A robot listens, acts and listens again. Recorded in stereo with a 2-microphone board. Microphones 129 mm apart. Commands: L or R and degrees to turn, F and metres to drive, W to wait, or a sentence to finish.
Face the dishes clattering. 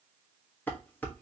L30
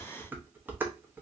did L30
R15
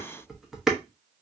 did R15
Facing the dishes clattering.